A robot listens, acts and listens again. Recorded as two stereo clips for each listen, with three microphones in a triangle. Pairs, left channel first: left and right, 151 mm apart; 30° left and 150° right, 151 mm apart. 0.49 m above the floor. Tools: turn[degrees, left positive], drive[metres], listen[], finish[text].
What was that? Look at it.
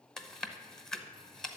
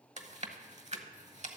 Thought: The chewing: 175° left.
Action: turn[175]
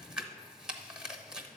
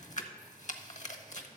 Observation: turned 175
Action: finish[Facing the chewing, under 1 m away.]